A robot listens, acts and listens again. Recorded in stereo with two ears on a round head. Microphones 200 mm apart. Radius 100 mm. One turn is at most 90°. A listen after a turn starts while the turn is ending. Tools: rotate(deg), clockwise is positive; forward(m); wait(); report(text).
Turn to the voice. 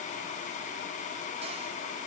wait()
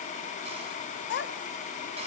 rotate(-55)
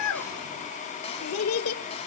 rotate(-70)
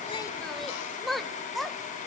report("Found it: a child speaking, straight ahead.")